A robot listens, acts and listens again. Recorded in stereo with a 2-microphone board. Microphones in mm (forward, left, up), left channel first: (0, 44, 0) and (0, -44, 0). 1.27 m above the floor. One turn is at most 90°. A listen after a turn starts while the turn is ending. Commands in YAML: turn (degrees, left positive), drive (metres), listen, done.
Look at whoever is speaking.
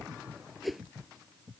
listen: true
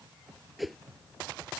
listen: true
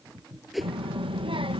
turn: -90
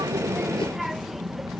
done: "Facing the child speaking."